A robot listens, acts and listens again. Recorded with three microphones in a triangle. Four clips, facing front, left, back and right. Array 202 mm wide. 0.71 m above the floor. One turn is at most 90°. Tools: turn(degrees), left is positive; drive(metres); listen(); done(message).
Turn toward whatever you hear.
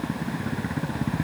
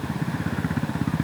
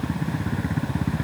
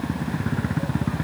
listen()
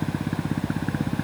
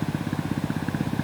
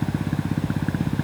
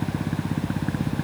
listen()
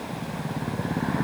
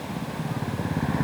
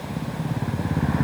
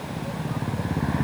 done("I can't make out anything.")